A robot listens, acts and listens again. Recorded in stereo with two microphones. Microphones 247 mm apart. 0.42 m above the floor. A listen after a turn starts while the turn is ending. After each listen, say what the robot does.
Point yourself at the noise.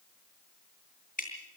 Turn 35° left.
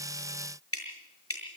Turn 115° left.
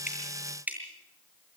Facing the dripping.